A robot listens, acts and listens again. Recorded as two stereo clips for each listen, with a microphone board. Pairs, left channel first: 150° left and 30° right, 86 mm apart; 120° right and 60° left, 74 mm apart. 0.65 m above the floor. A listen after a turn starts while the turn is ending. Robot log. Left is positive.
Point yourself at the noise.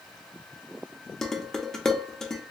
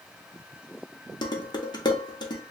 note: The dishes clattering: 125° right.
cmd yaw -125
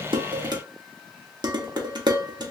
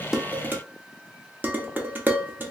end: Facing the dishes clattering, under 1 m away.